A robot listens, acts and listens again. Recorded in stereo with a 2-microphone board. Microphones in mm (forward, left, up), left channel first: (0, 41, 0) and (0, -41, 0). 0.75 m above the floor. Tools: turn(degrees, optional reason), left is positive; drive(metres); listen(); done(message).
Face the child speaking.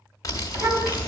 turn(degrees=-30, reason="The child speaking: about 30° right or 150° right.")
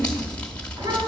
turn(degrees=-120, reason="So it is at 120° right.")
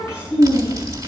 turn(degrees=35, reason="The child speaking is now 35° left.")
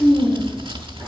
done("Found it: a child speaking, straight ahead.")